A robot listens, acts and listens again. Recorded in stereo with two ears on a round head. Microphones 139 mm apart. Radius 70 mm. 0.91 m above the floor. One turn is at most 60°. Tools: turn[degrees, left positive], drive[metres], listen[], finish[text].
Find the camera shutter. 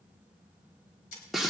Thought: The camera shutter: about 55° left or 125° left.
Action: turn[55]
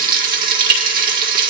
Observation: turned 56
Action: listen[]
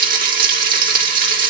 Action: listen[]
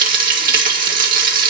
Action: finish[I heard a camera shutter, but can't make it out now. It was about straight ahead or 70° left.]